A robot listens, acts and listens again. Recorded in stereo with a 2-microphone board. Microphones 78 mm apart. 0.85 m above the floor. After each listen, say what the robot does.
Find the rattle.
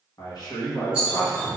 Turn 30° right.
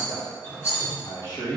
Turn 145° right.
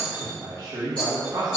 Turn 10° left.
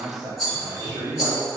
Found it: a rattle, straight ahead, 1 to 2 m away.